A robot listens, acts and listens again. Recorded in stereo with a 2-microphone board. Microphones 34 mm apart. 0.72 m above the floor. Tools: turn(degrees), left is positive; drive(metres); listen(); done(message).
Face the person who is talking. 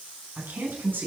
turn(degrees=-90)
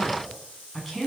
done("Found it: a woman speaking, straight ahead.")